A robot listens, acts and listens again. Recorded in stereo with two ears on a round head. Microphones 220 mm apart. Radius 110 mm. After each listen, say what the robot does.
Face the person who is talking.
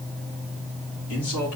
Turn 90° left.
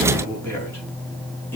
Turn 10° left.
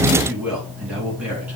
Facing the man speaking, over 4 m away.